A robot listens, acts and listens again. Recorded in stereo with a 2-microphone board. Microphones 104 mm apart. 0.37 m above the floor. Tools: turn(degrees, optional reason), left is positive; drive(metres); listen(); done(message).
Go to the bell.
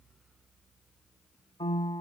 listen()
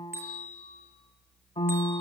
turn(degrees=-20, reason="The bell: about 20° right or 160° right.")
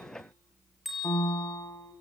drive(metres=1.0)
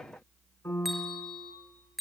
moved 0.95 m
drive(metres=1.0)
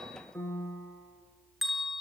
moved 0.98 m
drive(metres=1.0)
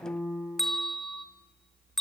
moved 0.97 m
drive(metres=1.0)
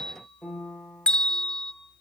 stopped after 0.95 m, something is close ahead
turn(degrees=10, reason="The bell is now 10° left.")
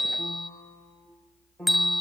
done("Arrived at the bell, straight ahead.")